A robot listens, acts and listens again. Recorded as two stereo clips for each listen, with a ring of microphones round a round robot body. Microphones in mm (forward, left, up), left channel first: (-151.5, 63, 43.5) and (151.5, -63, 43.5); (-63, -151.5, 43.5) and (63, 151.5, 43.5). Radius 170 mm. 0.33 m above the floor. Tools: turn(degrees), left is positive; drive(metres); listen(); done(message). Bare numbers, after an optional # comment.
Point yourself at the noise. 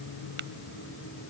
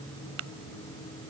# The tapping: 30° left.
turn(30)
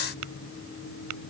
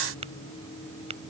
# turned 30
done("Found it: tapping, straight ahead.")